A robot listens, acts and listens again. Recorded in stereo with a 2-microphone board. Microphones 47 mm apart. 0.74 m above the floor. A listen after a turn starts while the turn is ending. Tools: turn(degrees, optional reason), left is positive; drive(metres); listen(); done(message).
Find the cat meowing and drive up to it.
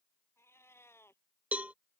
turn(degrees=60, reason="The cat meowing: about 60° left or 120° left.")
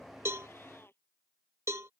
turn(degrees=55, reason="So it is at 55° left.")
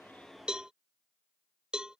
listen()
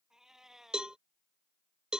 turn(degrees=-10, reason="The cat meowing is now 10° right.")
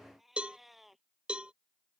drive(metres=1.0)
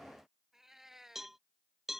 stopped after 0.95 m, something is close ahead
turn(degrees=-10, reason="The cat meowing is now 10° right.")
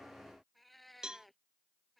done("Something is in my way. I am facing the cat meowing but have not reached it.")